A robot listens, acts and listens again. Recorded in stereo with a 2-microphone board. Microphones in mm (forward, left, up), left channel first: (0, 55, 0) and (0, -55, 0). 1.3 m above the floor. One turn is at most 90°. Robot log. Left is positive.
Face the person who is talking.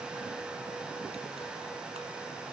cmd idle
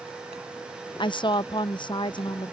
note: The woman speaking: about 45° left or 135° left.
cmd yaw +45
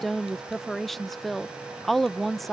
end: Facing the woman speaking.